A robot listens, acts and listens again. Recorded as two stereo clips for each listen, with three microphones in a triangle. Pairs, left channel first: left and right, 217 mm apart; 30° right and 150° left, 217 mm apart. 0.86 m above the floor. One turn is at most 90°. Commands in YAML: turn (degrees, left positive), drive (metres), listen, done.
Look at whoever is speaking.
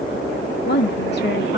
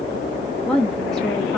turn: 55
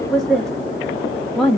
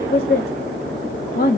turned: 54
done: "Found it: a woman speaking, straight ahead."